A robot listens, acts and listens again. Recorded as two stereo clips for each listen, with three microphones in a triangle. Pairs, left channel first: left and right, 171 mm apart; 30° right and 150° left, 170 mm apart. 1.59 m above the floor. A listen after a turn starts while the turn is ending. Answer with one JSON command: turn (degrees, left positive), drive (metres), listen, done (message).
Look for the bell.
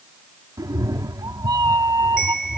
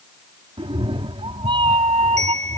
{"turn": 100}
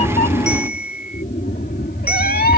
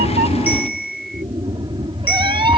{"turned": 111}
{"turn": -10}
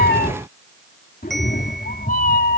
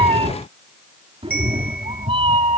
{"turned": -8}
{"done": "Found it: a bell, straight ahead."}